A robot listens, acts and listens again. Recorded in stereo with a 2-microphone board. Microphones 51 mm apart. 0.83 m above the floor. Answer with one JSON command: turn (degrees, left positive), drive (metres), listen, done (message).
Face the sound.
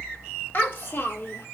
{"turn": 55}
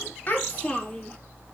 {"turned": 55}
{"turn": 25}
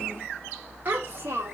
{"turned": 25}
{"turn": -45}
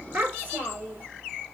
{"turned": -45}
{"turn": -30}
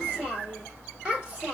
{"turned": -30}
{"turn": -15}
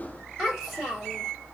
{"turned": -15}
{"done": "Found it: a child speaking, straight ahead."}